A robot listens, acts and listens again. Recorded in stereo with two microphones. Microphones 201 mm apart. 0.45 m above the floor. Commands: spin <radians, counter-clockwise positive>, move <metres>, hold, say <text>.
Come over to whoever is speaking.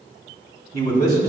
spin -0.87
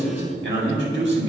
spin -1.40
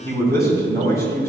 spin 0.26
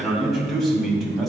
move 1.0
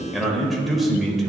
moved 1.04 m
move 1.0
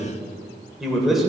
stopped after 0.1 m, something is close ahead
say Arrived at the man speaking, straight ahead.